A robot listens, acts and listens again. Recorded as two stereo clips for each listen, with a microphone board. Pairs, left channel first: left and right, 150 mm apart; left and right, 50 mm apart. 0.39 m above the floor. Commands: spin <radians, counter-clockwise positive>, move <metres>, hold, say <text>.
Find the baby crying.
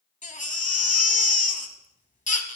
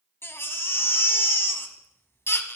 spin 0.96
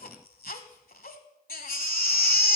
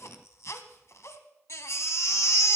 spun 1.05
spin 1.22
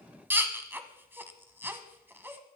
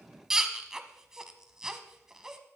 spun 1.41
spin -0.26
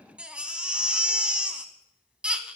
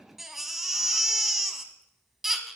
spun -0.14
say Facing the baby crying.